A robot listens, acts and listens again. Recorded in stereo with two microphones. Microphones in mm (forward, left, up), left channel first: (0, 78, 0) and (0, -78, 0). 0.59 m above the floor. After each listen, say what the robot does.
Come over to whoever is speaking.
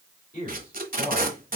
Turn 65° left.
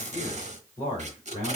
Turn 40° left.
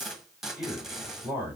Turn 10° right.
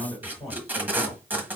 Drive 1.0 m forward.
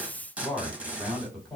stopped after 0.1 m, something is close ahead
Something is in my way. I am facing the man speaking but have not reached it.